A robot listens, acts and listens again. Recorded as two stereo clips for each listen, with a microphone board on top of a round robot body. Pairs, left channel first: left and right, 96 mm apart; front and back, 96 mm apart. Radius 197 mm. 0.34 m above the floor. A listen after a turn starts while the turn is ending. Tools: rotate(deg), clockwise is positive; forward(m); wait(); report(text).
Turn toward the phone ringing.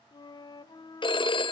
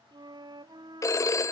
rotate(-55)
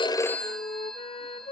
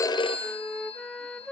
report("Facing the phone ringing.")